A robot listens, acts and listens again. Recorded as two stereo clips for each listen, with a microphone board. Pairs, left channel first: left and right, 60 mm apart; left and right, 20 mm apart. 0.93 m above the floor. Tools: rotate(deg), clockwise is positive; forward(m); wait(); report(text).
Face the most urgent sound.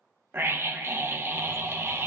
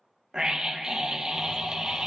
rotate(45)
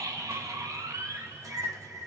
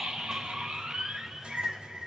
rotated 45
rotate(85)
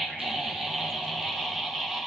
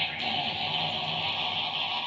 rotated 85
report("Facing the scream, under 1 m away.")